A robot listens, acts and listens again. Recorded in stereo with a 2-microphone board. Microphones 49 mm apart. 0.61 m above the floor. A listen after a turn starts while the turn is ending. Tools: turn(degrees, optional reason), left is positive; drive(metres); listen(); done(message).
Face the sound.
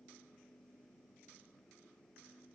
listen()
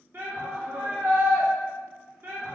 turn(degrees=-55, reason="The shout: about 55° right or 125° right.")
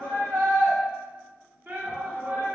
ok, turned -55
turn(degrees=-50, reason="So it is at 50° right.")
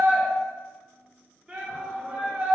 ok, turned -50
turn(degrees=-25, reason="The shout is now 25° right.")
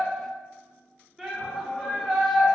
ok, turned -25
done("Facing the shout.")